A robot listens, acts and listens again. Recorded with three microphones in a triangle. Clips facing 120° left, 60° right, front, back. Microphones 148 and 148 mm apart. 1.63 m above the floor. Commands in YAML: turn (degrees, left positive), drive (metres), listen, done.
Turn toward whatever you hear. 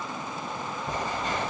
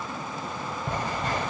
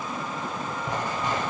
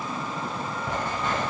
turn: -75
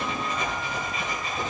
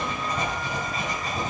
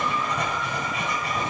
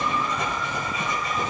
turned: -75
turn: -15
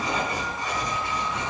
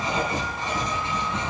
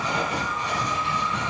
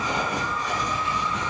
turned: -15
done: "Found it: writing, straight ahead, 2 to 4 m away."